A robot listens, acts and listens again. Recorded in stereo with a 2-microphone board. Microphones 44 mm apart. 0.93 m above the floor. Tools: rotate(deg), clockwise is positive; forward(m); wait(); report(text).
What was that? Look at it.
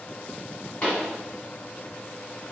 rotate(-35)
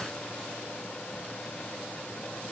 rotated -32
wait()
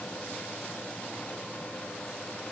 report("I heard a pop, but can't make it out now. It was about straight ahead or 115° left.")